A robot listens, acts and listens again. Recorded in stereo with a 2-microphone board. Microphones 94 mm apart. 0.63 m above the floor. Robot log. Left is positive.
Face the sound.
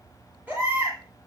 note: The baby crying: about 20° right or 160° right.
cmd yaw -20
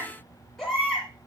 end: Facing the baby crying, over 4 m away.